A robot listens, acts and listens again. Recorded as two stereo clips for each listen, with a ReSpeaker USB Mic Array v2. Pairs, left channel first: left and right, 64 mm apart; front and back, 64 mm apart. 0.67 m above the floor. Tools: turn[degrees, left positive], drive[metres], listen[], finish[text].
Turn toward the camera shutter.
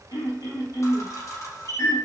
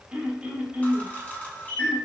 Thought: The camera shutter: 65° left.
Action: turn[65]
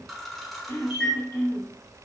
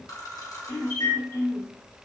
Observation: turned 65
Action: finish[Facing the camera shutter, 1 to 2 m away.]